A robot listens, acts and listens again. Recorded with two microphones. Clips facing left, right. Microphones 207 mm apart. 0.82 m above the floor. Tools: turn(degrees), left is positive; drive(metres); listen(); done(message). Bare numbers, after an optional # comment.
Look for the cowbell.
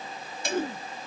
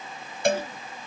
# The cowbell: about 60° right or 120° right.
turn(-60)
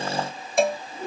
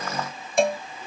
done("Facing the cowbell.")